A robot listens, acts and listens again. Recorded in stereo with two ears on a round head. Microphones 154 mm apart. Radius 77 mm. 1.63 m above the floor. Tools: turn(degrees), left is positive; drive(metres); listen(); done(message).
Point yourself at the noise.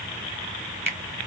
turn(degrees=-30)
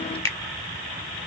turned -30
turn(degrees=15)
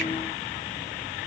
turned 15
listen()
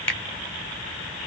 turn(degrees=10)
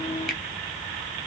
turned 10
done("Found it: a finger snap, straight ahead, 1 to 2 m away.")